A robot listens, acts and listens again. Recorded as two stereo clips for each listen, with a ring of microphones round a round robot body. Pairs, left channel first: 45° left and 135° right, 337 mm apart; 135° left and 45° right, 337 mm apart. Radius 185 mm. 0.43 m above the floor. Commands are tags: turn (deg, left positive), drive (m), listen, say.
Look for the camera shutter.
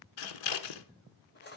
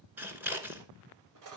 <listen/>
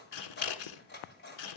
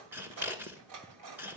<listen/>
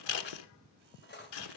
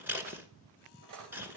<say>I can't make out a camera shutter to turn to.</say>